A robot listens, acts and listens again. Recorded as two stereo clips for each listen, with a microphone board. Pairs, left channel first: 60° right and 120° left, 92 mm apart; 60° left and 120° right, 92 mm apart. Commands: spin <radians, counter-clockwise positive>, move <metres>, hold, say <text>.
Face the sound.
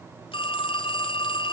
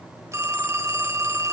spin -1.13
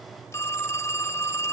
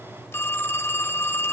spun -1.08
say Found it: a phone ringing, straight ahead.